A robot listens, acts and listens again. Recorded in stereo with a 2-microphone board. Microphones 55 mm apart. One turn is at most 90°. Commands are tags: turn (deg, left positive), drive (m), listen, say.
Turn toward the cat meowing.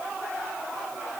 <listen/>
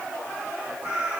<turn deg="-30"/>
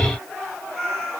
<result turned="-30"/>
<say>Found it: a cat meowing, straight ahead.</say>